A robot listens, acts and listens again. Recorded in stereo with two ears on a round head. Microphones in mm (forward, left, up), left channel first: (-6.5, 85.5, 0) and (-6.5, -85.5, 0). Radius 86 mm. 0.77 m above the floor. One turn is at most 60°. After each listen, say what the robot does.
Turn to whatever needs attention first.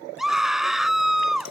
Turn 30° left.
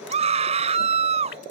Turn 35° right.
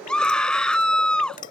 Found it: a scream, straight ahead.